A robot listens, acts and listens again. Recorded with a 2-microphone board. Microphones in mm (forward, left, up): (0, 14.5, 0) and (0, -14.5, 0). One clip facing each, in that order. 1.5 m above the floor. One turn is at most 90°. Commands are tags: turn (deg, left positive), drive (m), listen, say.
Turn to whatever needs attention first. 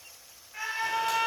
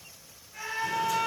<turn deg="20"/>
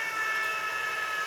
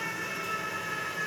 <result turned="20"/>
<turn deg="90"/>
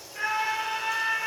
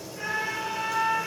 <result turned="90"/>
<turn deg="60"/>
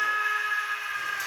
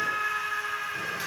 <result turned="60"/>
<turn deg="30"/>
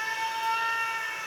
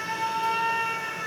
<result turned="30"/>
<turn deg="15"/>
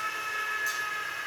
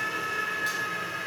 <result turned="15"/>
<say>Found it: a scream, straight ahead.</say>